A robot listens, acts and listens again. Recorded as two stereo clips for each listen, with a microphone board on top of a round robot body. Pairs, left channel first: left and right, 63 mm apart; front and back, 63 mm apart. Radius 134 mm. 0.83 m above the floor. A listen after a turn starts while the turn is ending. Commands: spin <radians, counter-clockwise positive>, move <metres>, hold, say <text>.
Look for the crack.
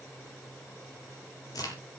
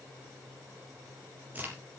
spin 2.01
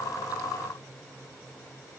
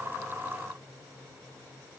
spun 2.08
say I heard a crack from this way, but can't make it out now.